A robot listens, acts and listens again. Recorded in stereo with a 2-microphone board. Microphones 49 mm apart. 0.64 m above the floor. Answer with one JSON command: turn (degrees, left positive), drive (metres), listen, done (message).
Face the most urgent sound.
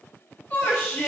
{"turn": 50}
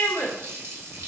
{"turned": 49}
{"turn": 80}
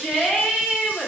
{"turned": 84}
{"done": "Facing the shout, 1 to 2 m away."}